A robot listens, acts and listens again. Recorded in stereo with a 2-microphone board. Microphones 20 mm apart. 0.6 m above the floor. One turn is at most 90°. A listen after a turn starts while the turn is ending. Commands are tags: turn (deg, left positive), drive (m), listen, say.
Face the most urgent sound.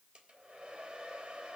<listen/>
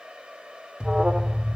<turn deg="-70"/>
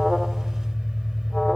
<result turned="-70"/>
<say>Facing the alarm.</say>